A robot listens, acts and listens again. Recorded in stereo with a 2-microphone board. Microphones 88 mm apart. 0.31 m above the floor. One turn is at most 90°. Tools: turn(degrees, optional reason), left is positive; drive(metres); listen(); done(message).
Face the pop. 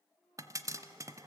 turn(degrees=-40, reason="The pop: about 40° right or 140° right.")
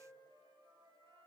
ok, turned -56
listen()
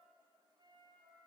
done("I heard a pop, but can't make it out now. It was about 15° left or 85° right.")